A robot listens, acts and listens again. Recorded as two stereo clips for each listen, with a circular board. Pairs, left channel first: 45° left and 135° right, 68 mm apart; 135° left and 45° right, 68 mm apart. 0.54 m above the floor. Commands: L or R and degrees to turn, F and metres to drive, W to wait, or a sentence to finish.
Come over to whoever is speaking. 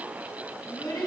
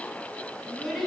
L50
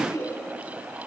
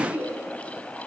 L20
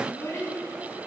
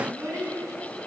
F1.0
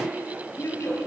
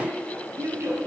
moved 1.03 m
F1.0
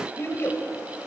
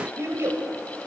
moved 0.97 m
F1.0
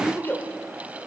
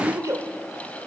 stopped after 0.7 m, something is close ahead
R10
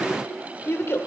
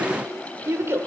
I am next to the child speaking.